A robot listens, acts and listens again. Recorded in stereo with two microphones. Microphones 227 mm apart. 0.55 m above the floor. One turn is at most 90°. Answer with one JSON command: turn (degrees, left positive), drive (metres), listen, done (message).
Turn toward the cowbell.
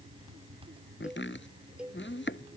{"turn": -30}
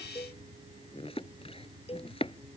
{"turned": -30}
{"turn": 25}
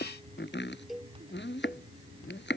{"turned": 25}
{"done": "Found it: a cowbell, straight ahead."}